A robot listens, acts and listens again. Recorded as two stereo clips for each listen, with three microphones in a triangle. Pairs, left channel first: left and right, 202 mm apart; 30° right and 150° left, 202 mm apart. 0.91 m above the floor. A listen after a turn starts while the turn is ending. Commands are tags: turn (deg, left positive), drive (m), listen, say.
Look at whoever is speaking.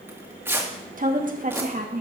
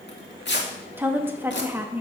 <turn deg="-130"/>
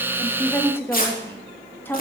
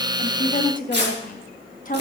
<turn deg="10"/>
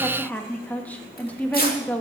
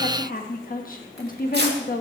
<say>Facing the woman speaking.</say>